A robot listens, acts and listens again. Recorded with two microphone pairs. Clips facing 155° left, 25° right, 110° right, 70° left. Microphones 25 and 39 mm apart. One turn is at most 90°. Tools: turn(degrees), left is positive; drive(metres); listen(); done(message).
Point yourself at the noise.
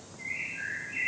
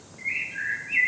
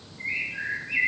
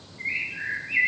done("Found it: a bird, straight ahead, 1 to 2 m away.")